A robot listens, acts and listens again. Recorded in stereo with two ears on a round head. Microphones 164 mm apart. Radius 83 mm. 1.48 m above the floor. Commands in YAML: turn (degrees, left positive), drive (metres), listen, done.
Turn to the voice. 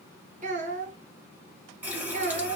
turn: -45
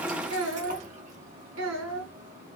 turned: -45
turn: -90
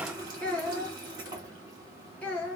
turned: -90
turn: 10
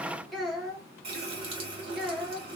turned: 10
done: "Found it: a child speaking, straight ahead."